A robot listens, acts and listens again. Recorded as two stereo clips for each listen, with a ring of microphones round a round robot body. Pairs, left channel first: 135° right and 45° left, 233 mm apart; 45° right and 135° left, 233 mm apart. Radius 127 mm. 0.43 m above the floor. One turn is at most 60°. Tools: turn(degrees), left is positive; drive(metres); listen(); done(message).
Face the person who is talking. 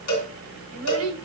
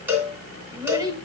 turn(degrees=60)
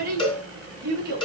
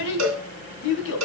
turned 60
done("Facing the child speaking, 2 to 4 m away.")